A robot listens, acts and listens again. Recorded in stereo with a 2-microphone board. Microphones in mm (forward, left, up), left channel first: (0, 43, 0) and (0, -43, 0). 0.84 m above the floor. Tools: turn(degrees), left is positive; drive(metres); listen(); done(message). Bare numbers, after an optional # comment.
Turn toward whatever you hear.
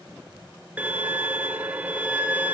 # The violin: about 20° right or 160° right.
turn(-20)
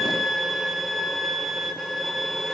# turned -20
done("Found it: a violin, straight ahead, 1 to 2 m away.")